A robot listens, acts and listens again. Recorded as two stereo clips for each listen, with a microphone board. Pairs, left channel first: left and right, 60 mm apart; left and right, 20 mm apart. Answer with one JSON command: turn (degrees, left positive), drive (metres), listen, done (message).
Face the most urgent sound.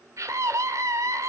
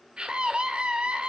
{"turn": -55}
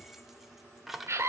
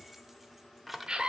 {"turn": -55}
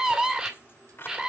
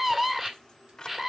{"turn": -15}
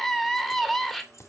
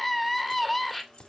{"done": "Facing the scream, 2 to 4 m away."}